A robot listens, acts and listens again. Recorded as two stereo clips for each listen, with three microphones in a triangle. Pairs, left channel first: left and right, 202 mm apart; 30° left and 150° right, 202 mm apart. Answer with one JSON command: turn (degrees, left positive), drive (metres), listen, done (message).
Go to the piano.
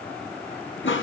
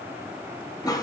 {"listen": true}
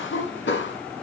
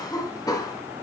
{"listen": true}
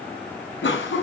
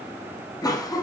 {"done": "I can't make out a piano to turn to."}